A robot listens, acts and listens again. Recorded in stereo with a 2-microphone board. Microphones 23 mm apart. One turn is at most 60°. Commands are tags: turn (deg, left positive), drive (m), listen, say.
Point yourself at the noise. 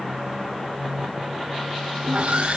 <turn deg="-60"/>
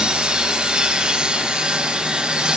<turn deg="-50"/>
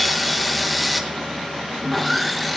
<say>Facing the sawing.</say>